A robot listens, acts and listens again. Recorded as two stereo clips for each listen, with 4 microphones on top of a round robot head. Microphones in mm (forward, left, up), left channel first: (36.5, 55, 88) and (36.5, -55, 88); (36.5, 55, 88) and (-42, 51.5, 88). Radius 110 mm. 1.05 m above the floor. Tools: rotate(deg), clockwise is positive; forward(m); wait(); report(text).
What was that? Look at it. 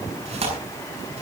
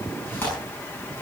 rotate(65)
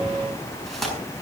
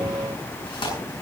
report("Found it: tearing paper, straight ahead.")